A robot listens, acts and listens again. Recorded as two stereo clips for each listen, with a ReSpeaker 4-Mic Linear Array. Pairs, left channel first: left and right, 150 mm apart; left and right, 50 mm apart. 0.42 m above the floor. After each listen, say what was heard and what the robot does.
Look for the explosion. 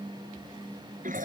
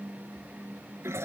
Keep listening.
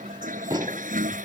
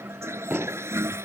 The explosion: about 30° right or 150° right. Turn 30° right.
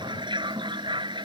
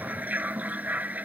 Keep listening.
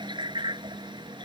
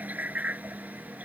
I heard an explosion, but can't make it out now. It was about straight ahead or 120° right.